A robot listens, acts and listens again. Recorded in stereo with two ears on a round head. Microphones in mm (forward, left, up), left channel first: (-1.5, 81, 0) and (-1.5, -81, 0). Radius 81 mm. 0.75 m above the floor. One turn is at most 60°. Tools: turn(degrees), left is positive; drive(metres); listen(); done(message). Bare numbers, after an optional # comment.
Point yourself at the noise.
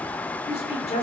# The woman speaking: about 40° left or 140° left.
turn(40)
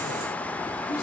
listen()
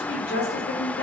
# So it is at 100° left.
turn(60)
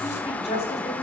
# The woman speaking is now 40° left.
turn(40)
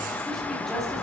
listen()
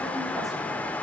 listen()
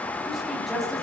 done("Found it: a woman speaking, straight ahead.")